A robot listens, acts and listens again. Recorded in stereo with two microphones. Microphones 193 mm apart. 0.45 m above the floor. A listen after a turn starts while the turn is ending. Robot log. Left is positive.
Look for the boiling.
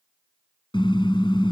cmd idle
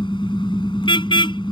cmd idle
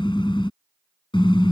end: I can't make out boiling, only a car horn.